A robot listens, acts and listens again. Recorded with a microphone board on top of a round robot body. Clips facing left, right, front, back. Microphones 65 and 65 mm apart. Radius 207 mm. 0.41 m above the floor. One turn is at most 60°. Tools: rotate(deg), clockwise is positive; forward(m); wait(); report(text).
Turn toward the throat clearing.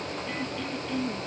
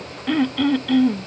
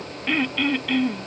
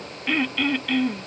rotate(60)
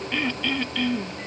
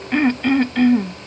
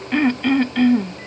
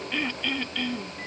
rotate(45)
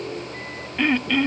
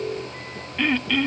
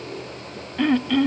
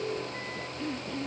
rotate(-10)
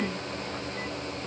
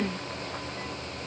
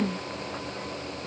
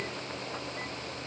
report("Found it: throat clearing, straight ahead.")